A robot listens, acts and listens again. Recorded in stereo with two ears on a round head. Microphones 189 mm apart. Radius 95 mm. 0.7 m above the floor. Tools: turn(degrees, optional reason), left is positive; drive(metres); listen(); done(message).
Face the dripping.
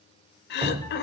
turn(degrees=-25, reason="The dripping: about 25° right or 155° right.")
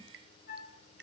listen()
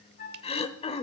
listen()
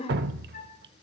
turn(degrees=-125, reason="So it is at 125° right.")
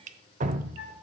turn(degrees=-40, reason="The dripping is now 40° right.")
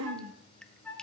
listen()
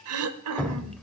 done("Found it: dripping, straight ahead.")